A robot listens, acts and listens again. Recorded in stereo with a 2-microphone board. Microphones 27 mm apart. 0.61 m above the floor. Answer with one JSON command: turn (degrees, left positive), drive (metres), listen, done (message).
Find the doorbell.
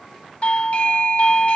{"turn": 55}
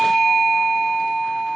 {"turn": 15}
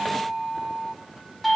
{"done": "Found it: a doorbell, straight ahead."}